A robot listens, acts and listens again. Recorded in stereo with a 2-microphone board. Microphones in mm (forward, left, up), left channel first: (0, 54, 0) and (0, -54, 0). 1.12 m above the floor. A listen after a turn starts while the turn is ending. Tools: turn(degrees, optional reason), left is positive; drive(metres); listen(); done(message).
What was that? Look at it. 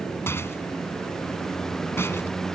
turn(degrees=20, reason="The rattle: about 20° left or 160° left.")
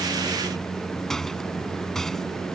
done("Found it: a rattle, straight ahead.")